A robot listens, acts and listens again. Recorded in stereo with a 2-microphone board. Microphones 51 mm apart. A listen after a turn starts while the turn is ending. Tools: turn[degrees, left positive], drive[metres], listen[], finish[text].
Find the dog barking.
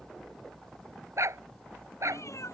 Action: turn[-90]
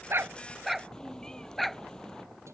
Action: finish[Found it: a dog barking, straight ahead.]